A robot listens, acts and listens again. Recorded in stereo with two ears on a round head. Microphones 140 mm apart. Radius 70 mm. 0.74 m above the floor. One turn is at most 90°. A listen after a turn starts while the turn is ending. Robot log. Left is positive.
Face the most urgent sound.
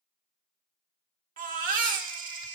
note: The baby crying: about 55° right or 125° right.
cmd yaw -55
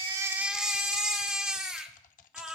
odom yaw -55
end: Facing the baby crying.